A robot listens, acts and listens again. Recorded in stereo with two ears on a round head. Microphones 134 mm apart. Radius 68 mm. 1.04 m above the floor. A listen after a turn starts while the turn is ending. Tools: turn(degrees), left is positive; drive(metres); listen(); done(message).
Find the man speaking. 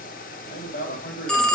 turn(degrees=75)
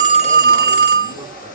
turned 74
listen()
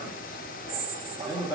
turn(degrees=30)
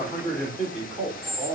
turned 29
done("Facing the man speaking, 2 to 4 m away.")